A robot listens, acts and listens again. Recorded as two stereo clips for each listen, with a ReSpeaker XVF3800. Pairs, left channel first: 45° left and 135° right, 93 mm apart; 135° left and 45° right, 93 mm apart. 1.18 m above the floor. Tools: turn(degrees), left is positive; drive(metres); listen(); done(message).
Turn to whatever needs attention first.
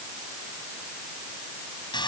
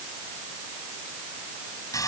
listen()
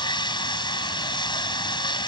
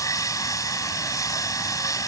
listen()
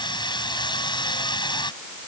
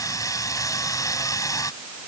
done("I can't make out anything urgent, only sawing.")